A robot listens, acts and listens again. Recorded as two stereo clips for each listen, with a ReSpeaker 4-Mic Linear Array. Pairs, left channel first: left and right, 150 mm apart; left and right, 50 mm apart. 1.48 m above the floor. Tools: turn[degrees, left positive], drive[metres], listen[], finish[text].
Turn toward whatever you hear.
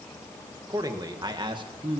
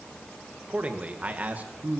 Thought: The man speaking: about 35° right or 145° right.
Action: turn[-35]
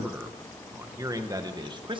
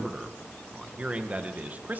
Thought: The man speaking: about 35° right or 145° right.
Action: turn[-35]
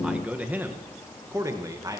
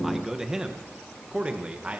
Thought: The man speaking: about 25° right or 155° right.
Action: turn[-25]
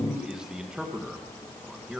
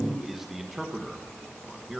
Action: finish[Facing the man speaking.]